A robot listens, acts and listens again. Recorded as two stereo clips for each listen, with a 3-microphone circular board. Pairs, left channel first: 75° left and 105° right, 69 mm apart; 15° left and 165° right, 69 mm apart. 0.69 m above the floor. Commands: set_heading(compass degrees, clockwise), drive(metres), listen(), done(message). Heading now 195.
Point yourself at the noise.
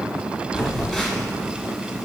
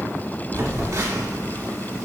set_heading(40)
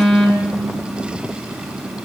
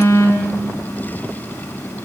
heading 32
set_heading(42)
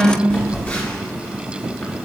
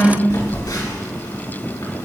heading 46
done("Found it: a phone buzzing, straight ahead.")